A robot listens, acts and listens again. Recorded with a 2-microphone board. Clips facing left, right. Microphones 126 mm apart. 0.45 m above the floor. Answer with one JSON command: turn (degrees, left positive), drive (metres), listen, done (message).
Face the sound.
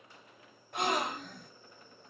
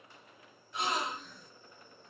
{"turn": 60}
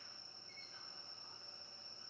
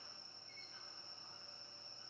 {"listen": true}
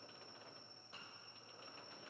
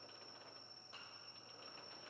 {"done": "I heard a gasp, but can't make it out now. It was about straight ahead or 60° left."}